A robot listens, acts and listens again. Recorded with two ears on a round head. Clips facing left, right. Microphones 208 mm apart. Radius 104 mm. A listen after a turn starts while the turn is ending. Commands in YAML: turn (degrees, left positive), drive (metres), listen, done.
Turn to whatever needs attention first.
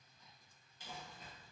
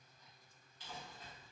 listen: true
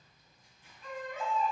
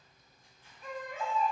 turn: -30
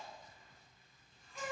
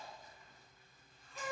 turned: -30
turn: 15
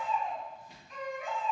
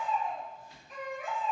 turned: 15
done: "Facing the baby crying."